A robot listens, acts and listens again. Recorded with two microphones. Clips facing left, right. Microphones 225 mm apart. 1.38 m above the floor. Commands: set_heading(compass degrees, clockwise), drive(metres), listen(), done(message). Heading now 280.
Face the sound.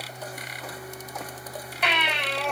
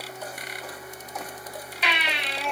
set_heading(220)
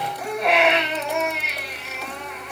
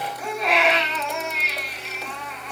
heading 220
set_heading(160)
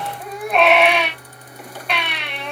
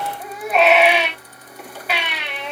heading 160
done("Found it: a baby crying, straight ahead.")